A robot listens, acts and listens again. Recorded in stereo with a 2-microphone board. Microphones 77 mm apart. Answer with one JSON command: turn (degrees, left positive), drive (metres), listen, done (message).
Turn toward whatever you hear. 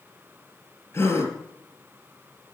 {"turn": 40}
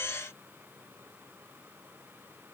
{"listen": true}
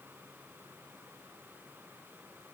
{"done": "I heard a gasp, but can't make it out now. It was about straight ahead or 100° left."}